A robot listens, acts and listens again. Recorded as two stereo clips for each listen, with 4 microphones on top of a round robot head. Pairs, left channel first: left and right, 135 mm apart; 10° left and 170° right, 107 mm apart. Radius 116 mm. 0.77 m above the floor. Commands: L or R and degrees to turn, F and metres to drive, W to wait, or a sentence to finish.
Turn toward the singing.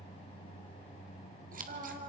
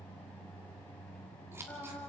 R65
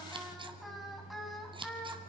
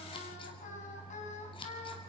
Facing the singing.